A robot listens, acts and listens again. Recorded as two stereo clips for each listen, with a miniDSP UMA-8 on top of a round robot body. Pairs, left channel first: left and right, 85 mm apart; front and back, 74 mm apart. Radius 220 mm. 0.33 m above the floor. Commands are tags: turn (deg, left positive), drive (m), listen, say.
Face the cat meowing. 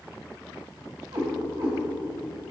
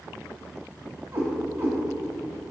<turn deg="-120"/>
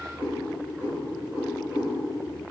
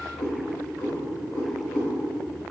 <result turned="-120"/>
<turn deg="-20"/>
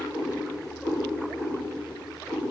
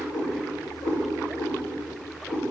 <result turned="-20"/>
<say>Found it: a cat meowing, straight ahead, over 4 m away.</say>